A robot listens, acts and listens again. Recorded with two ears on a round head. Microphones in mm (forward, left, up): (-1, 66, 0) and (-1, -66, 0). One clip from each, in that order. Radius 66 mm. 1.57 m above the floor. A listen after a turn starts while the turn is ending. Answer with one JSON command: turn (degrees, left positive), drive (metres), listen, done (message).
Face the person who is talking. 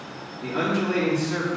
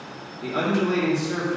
{"turn": -60}
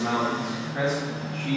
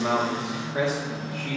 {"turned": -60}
{"turn": -60}
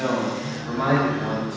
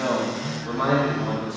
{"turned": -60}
{"turn": -10}
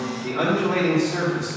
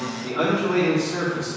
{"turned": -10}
{"done": "Facing the man speaking."}